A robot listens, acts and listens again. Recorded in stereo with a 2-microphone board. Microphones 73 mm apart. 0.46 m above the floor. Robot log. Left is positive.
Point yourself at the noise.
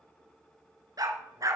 note: The dog barking: about 55° right or 125° right.
cmd yaw -55
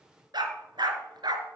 note: So it is at 85° right.
cmd yaw -85
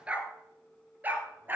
note: The dog barking is now 25° right.
cmd yaw -25
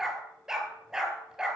note: The dog barking is now 10° right.
cmd yaw -10
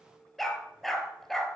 end: Facing the dog barking.